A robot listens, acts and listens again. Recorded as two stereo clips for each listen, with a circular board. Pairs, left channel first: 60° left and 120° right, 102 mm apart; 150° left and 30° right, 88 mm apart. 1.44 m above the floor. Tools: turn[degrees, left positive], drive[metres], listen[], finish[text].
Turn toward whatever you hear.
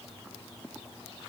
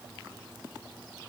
Action: listen[]
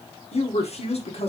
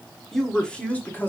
Thought: The woman speaking: 80° left.
Action: turn[80]
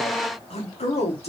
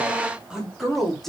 Thought: The woman speaking is now 65° left.
Action: turn[65]
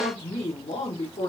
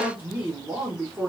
Thought: The woman speaking is now 45° left.
Action: turn[45]
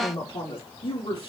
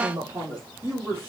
Thought: The woman speaking is now 30° left.
Action: turn[30]
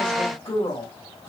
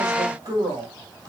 Thought: The woman speaking is now 10° left.
Action: turn[10]
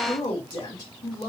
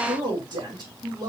Action: finish[Found it: a woman speaking, straight ahead, 2 to 4 m away.]